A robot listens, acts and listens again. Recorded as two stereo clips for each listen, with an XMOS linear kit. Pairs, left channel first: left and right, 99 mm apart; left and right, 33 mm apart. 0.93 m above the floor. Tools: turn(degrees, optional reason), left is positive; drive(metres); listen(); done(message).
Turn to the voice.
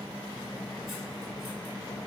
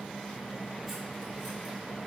listen()
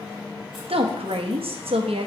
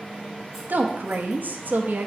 turn(degrees=-70, reason="The woman speaking: about 70° right or 110° right.")
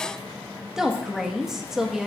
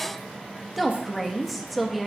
done("Facing the woman speaking, under 1 m away.")